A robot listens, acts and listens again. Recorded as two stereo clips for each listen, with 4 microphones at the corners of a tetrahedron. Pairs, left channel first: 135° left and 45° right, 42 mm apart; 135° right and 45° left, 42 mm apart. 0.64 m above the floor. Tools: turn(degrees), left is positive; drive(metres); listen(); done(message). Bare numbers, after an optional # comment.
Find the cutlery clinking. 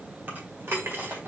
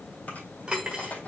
# The cutlery clinking: 25° right.
turn(-25)
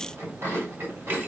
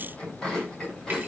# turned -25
listen()
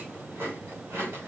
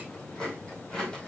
listen()
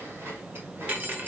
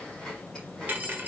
done("Found it: cutlery clinking, straight ahead.")